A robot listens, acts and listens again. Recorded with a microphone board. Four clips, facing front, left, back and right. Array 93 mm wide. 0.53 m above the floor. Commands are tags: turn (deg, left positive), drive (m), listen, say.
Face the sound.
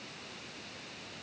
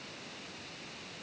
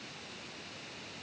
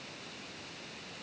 <listen/>
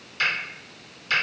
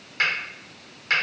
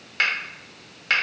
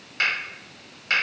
<turn deg="180"/>
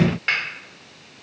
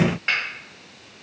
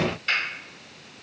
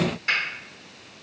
<turn deg="30"/>
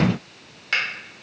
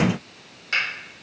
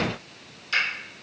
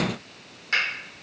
<say>Found it: a finger snap, straight ahead.</say>